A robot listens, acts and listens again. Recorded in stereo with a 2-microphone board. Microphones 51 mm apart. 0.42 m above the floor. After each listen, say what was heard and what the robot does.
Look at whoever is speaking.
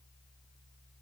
Keep listening.
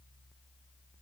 Keep listening.
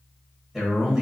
Turn 30° right.
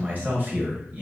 So it is at 135° right. Turn 135° right.
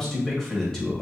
The man speaking is now 10° left. Turn 10° left.
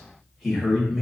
Found it: a man speaking, straight ahead.